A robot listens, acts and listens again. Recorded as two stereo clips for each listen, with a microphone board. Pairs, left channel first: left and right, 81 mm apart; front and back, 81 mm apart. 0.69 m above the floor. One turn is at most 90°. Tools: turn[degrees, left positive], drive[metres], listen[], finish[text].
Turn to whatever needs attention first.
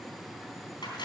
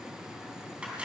Action: listen[]
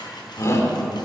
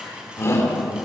Thought: The shout: 45° left.
Action: turn[45]
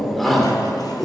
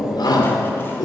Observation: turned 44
Action: finish[Found it: a shout, straight ahead.]